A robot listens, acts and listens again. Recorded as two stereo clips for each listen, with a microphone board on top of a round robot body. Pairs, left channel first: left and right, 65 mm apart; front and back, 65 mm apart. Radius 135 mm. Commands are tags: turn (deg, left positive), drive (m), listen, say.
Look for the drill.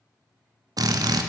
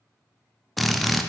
<turn deg="-90"/>
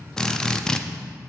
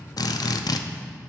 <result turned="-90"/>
<turn deg="10"/>
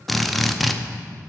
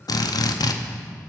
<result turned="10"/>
<say>Found it: a drill, straight ahead, under 1 m away.</say>